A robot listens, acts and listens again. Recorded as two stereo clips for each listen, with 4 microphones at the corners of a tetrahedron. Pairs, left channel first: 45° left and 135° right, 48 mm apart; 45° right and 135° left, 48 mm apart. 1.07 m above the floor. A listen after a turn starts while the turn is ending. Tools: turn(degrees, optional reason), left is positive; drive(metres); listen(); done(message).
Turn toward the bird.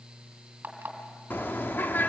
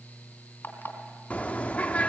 turn(degrees=10, reason="The bird: 10° left.")
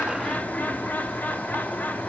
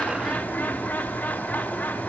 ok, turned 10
done("Found it: a bird, straight ahead, under 1 m away.")